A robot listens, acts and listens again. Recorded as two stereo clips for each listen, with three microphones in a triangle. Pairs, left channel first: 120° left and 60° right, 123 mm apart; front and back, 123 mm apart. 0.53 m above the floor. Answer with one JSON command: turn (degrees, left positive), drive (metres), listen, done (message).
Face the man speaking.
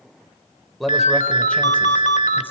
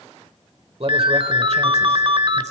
{"turn": -155}
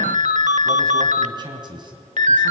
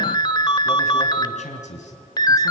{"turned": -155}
{"turn": -10}
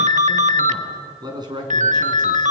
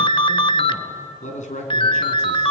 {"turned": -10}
{"done": "Found it: a man speaking, straight ahead."}